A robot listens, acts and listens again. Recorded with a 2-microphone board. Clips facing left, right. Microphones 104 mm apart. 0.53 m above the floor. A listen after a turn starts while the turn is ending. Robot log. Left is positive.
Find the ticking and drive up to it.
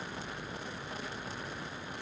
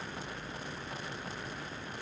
cmd idle
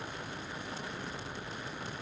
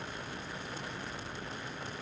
cmd idle
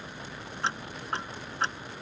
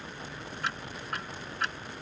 note: The ticking: about 30° left or 150° left.
cmd yaw +30
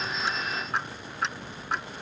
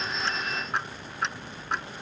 cmd fwd 1.0
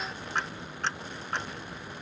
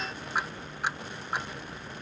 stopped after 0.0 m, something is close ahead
note: The ticking is now 10° right.
cmd yaw -10
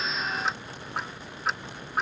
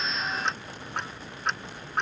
end: Blocked. The ticking is further on, straight ahead.